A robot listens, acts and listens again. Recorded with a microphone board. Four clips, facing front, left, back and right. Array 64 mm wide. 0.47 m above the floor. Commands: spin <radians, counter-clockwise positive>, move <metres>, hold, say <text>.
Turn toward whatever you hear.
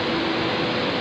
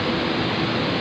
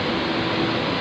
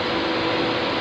hold
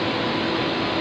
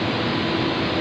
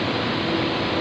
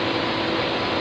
hold
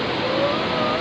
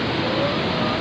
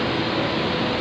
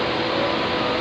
say I can't make out anything.